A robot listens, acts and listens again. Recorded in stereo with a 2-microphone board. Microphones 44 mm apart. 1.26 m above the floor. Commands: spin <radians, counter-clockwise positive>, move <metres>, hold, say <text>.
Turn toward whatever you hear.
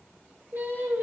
spin -1.05
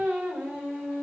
spin -0.79
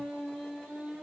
spin -0.26
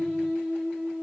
say Found it: singing, straight ahead, 2 to 4 m away.